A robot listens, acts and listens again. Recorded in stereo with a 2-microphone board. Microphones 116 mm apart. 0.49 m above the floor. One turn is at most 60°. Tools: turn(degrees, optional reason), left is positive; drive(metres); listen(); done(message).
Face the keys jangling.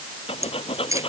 turn(degrees=-25, reason="The keys jangling: about 25° right or 155° right.")
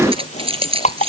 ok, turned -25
turn(degrees=-60, reason="So it is at 125° right.")
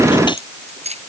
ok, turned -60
turn(degrees=-60, reason="The keys jangling is now 70° right.")
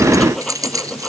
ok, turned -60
turn(degrees=-30, reason="The keys jangling is now 30° right.")
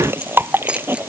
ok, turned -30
listen()
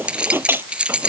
turn(degrees=-10, reason="The keys jangling is now 10° right.")
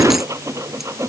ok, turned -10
listen()
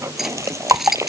done("Found it: keys jangling, straight ahead.")